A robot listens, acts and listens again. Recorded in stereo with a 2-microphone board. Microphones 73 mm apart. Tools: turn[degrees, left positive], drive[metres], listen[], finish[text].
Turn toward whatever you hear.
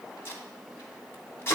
Thought: The tape being pulled: about 35° left or 145° left.
Action: turn[35]
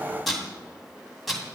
Action: finish[Facing the tape being pulled.]